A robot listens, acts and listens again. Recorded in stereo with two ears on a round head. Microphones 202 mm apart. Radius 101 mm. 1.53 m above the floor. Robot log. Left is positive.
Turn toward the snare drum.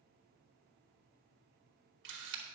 cmd idle
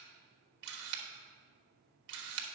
cmd idle
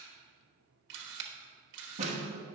note: The snare drum: about 30° right or 150° right.
cmd yaw -30
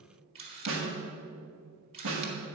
note: So it is at 115° right.
cmd yaw -115
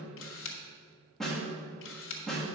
end: Found it: a snare drum, straight ahead, 1 to 2 m away.